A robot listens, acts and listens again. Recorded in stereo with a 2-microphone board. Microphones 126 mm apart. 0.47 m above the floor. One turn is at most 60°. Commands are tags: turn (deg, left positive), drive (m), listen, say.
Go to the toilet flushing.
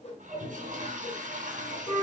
<turn deg="-60"/>
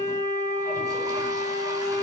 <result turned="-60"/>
<turn deg="-30"/>
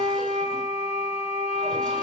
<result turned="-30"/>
<listen/>
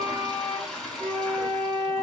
<drive m="1.0"/>
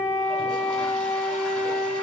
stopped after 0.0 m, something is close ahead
<listen/>
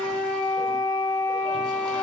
<listen/>
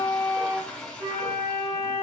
<say>Blocked. The toilet flushing is further on, straight ahead.</say>